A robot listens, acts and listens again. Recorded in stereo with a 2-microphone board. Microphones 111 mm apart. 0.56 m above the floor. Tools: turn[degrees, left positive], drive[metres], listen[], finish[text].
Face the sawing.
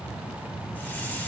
Action: listen[]
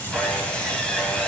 Action: turn[30]
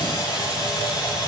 Thought: So it is at 140° left.
Action: turn[140]
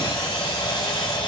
Thought: The sawing is now 50° left.
Action: turn[50]
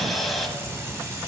Action: finish[Found it: sawing, straight ahead.]